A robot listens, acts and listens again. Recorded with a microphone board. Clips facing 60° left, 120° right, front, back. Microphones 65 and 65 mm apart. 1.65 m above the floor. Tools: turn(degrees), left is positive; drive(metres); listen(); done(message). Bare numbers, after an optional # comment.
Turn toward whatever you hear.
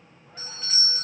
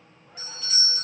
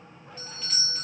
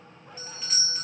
# The doorbell: 105° left.
turn(105)
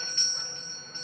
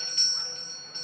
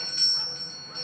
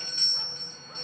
done("Found it: a doorbell, straight ahead, under 1 m away.")